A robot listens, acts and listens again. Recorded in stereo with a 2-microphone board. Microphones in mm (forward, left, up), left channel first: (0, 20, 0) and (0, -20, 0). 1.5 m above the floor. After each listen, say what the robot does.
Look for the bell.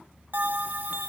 Turn 50° right.
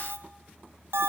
Turn 80° right.
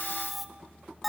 Found it: a bell, straight ahead, 1 to 2 m away.